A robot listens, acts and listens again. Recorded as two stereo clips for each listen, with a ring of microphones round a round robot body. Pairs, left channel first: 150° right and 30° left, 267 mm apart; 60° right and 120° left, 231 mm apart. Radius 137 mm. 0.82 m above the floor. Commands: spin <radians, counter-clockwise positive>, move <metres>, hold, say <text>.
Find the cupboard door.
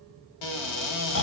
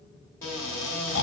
spin -2.44
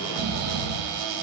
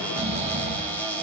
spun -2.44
spin 0.44
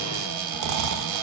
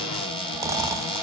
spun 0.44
spin 0.17
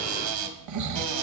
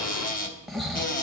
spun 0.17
say Found it: a cupboard door, straight ahead, under 1 m away.